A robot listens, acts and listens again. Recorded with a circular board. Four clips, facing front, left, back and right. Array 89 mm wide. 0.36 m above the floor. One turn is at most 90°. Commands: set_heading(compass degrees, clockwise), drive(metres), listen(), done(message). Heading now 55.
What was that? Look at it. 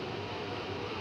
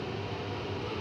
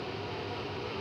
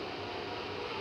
listen()
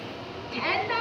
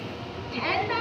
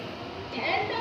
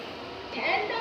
set_heading(15)
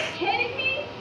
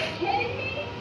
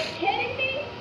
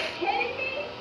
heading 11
done("Found it: a shout, straight ahead.")